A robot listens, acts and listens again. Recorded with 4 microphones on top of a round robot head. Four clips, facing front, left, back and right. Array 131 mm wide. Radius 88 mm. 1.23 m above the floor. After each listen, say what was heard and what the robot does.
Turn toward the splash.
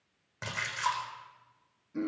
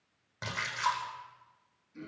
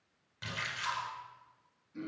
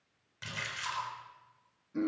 The splash: 45° left. Turn 45° left.
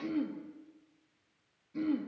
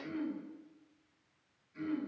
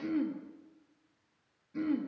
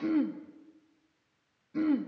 I heard a splash from this way, but can't make it out now.